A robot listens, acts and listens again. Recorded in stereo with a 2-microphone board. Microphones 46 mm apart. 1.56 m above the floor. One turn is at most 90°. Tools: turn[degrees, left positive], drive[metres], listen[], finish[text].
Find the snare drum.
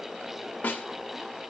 Thought: The snare drum: about 40° left or 140° left.
Action: turn[40]
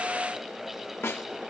Thought: So it is at 100° left.
Action: turn[90]
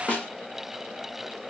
Thought: The snare drum is now 30° left.
Action: turn[30]
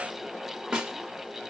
Thought: The snare drum is now 15° right.
Action: turn[-15]
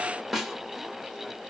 Action: finish[Facing the snare drum.]